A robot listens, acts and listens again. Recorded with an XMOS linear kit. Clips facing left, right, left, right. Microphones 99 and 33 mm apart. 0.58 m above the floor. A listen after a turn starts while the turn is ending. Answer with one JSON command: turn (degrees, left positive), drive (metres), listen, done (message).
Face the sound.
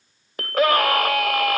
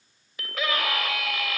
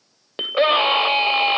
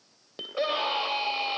{"turn": 60}
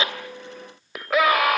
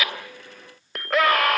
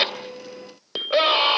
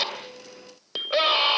{"done": "Facing the scream."}